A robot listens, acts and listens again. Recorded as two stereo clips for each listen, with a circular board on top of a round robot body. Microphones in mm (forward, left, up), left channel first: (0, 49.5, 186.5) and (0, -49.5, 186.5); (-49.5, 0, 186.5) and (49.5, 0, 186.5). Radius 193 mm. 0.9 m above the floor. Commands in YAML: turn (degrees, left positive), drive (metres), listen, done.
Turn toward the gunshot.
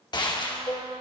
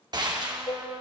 turn: 45
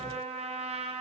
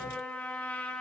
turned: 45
done: "I heard a gunshot from this way, but can't make it out now."